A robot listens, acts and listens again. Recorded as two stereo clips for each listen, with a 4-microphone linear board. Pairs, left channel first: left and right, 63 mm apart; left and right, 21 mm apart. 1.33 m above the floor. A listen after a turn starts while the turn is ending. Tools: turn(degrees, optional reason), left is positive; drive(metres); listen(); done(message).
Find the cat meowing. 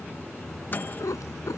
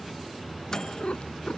turn(degrees=55, reason="The cat meowing: about 55° left or 125° left.")
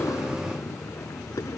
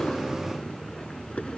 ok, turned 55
turn(degrees=65, reason="So it is at 65° left.")
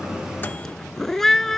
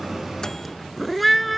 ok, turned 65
done("Found it: a cat meowing, straight ahead.")